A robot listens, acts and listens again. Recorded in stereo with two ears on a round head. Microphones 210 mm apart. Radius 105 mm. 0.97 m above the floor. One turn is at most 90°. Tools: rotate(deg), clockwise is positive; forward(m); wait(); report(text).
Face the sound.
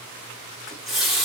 rotate(-30)
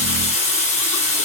rotate(-90)
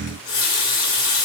rotate(-55)
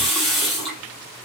report("Found it: a running tap, straight ahead.")